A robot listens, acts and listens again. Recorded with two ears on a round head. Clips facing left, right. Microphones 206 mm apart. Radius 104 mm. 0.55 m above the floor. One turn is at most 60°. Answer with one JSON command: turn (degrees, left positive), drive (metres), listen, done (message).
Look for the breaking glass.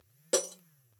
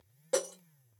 {"turn": 35}
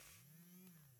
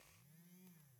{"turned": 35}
{"listen": true}
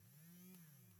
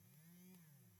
{"done": "I heard breaking glass, but can't make it out now. It was about straight ahead or 110° left."}